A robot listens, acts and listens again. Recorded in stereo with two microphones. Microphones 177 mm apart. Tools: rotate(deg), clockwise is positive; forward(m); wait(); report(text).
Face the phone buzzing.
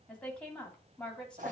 wait()
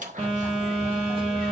rotate(30)
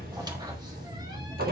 rotate(120)
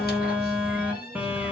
rotate(10)
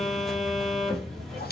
report("Found it: a phone buzzing, straight ahead.")